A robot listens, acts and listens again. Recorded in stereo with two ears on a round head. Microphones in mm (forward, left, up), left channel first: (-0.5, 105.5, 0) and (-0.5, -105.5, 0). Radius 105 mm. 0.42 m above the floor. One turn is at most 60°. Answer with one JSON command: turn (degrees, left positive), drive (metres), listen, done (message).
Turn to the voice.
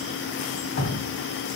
{"listen": true}
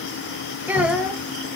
{"turn": -30}
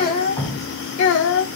{"turn": 55}
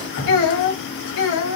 {"turn": 55}
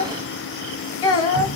{"turn": 20}
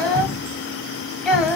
{"done": "Found it: a child speaking, straight ahead."}